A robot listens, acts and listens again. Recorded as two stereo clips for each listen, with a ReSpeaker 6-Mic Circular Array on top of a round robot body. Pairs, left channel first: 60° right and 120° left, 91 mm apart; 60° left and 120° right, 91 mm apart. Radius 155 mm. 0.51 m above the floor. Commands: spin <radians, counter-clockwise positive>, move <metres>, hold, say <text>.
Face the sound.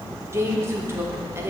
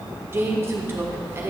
spin 3.14
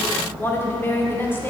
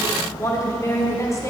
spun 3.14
say Found it: a woman speaking, straight ahead.